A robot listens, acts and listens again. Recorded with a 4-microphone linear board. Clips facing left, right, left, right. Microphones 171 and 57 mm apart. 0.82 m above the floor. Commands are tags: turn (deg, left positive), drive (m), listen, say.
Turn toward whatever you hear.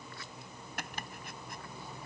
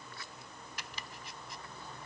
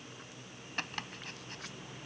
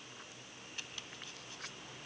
<turn deg="55"/>
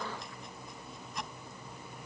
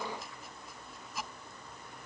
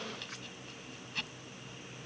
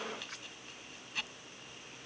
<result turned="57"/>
<say>Facing the chopping.</say>